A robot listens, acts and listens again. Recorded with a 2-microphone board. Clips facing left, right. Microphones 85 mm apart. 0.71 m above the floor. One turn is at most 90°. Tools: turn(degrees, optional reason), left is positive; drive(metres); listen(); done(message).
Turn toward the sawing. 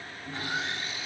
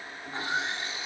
turn(degrees=-25, reason="The sawing: about 25° right or 155° right.")
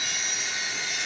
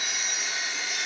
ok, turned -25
done("Facing the sawing.")